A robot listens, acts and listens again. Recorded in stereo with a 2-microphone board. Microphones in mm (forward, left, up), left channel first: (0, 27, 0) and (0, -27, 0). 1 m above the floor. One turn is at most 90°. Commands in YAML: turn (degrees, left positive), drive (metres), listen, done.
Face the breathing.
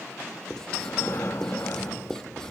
turn: 50
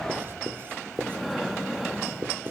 done: "Found it: breathing, straight ahead."